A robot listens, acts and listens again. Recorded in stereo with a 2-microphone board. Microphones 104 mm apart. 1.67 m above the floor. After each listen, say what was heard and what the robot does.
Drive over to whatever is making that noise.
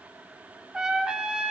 Turn 30° right.
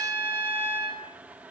So it is at 20° left. Turn 20° left.
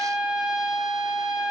Drive 1.0 m forward.
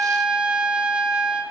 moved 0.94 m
The trumpet is now 10° right. Turn 10° right.
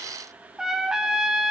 Drive 1.0 m forward.
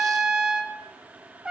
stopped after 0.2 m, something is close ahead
The trumpet is now 10° right. Turn 10° right.
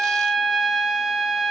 I am next to the trumpet.